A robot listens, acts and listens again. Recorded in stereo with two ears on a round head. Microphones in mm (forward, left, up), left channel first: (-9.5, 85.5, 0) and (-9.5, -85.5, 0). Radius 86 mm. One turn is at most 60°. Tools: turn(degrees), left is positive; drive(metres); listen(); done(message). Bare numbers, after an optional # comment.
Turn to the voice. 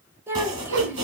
turn(-30)
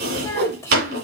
# So it is at 20° left.
turn(20)
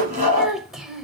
done("Facing the child speaking.")